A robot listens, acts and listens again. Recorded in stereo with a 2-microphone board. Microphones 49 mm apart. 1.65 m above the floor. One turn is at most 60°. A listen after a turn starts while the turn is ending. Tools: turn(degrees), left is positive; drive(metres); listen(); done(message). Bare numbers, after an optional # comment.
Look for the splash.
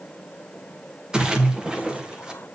# The splash: about 15° right or 165° right.
turn(-15)
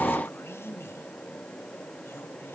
listen()
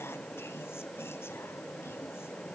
done("I heard a splash, but can't make it out now. It was about straight ahead or 150° right.")